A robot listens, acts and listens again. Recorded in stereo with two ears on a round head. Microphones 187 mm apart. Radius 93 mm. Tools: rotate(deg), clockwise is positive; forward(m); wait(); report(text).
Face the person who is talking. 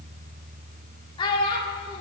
rotate(-25)
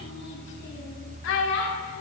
rotate(-115)
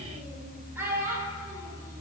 rotate(10)
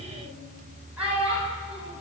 report("Facing the child speaking.")